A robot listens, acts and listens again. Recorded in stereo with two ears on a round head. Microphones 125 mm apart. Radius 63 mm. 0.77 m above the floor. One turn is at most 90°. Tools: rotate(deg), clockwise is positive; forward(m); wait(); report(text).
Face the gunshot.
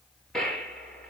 rotate(-30)
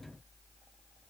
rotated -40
wait()
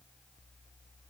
report("I heard a gunshot, but can't make it out now. It was about 35° right or 135° left.")